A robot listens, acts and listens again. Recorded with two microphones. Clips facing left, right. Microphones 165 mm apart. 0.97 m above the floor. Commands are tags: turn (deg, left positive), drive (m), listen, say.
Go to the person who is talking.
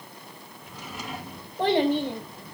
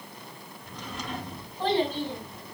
<turn deg="75"/>
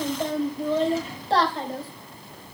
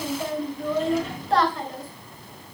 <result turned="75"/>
<turn deg="30"/>
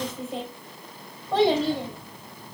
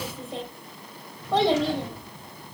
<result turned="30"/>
<drive m="1.0"/>
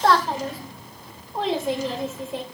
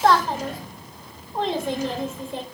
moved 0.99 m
<drive m="1.0"/>
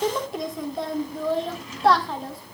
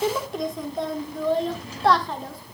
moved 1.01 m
<drive m="1.0"/>
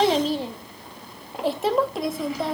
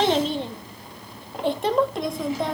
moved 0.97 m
<drive m="1.0"/>
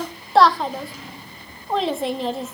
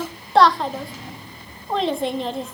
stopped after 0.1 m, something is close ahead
<say>I am next to the child speaking.</say>